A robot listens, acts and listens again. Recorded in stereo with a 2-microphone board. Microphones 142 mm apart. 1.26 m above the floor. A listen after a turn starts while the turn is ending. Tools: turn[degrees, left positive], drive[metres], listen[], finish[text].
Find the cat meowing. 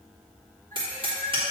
Thought: The cat meowing: about 75° right or 105° right.
Action: turn[-75]
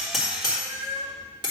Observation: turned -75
Thought: So it is at 30° right.
Action: turn[-30]
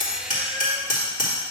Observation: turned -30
Action: listen[]
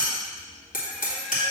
Action: listen[]
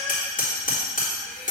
Action: finish[Facing where the cat meowing came from. I can't hear it now.]